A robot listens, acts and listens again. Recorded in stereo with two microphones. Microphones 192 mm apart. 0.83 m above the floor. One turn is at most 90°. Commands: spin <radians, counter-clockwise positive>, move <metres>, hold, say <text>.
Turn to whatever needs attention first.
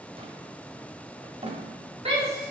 spin -0.61
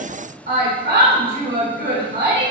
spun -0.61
spin -1.57
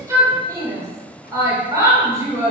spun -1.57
spin -0.35
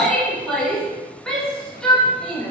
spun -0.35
say Facing the shout.